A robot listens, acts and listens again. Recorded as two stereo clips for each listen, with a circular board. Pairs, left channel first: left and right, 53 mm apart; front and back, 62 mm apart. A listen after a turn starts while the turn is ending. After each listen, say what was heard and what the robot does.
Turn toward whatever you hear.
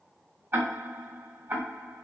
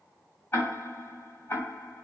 The ticking: 50° right. Turn 50° right.
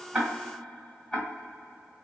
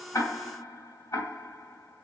Facing the ticking, 1 to 2 m away.